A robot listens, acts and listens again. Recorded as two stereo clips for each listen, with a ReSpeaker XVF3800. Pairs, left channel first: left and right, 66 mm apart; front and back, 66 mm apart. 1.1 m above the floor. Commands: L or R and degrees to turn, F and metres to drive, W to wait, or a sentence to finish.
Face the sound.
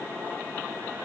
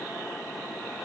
W
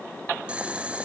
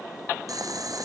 R160
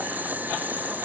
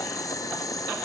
R25
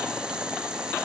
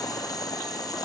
R15
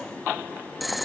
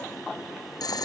Facing the boiling.